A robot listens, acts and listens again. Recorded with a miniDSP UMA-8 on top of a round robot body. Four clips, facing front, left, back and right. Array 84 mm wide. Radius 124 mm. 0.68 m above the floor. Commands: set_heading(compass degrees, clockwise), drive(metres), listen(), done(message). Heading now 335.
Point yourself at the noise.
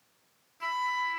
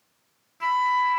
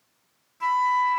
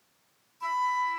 set_heading(235)
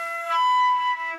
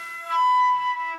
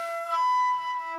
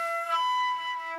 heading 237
done("Facing the flute.")